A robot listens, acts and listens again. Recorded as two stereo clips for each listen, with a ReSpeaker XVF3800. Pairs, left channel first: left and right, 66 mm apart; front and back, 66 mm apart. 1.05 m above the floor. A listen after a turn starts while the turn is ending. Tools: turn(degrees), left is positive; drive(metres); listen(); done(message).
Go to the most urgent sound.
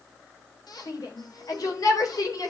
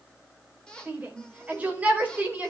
turn(degrees=115)
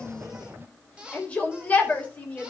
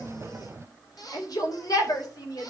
turn(degrees=20)
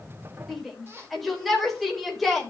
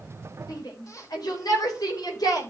drive(metres=1.0)
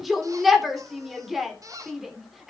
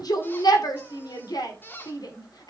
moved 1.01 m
drive(metres=1.0)
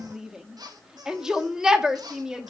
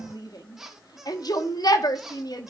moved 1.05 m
turn(degrees=-10)
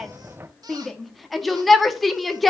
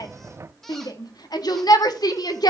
drive(metres=1.0)
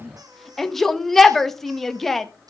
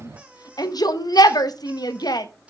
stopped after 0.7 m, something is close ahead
done("Arrived at the shout, straight ahead.")